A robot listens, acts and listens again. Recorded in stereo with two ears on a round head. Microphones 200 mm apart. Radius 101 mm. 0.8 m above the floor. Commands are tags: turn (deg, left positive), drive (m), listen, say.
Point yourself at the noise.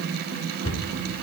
<turn deg="65"/>
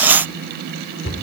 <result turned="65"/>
<turn deg="50"/>
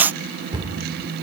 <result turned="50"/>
<turn deg="-20"/>
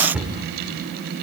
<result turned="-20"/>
<say>Facing the cupboard door.</say>